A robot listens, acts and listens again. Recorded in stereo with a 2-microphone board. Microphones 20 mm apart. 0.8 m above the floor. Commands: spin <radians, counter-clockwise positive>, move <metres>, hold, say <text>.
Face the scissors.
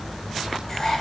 hold
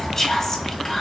hold
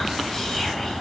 say I can't make out scissors to turn to.